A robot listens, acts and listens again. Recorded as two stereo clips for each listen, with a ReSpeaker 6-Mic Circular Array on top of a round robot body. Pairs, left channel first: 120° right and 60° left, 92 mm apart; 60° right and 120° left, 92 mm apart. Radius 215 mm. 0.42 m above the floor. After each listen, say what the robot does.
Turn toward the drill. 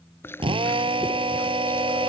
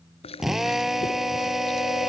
Turn 35° left.
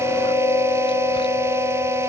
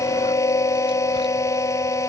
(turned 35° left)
Keep listening.
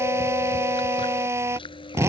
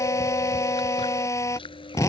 Facing the drill.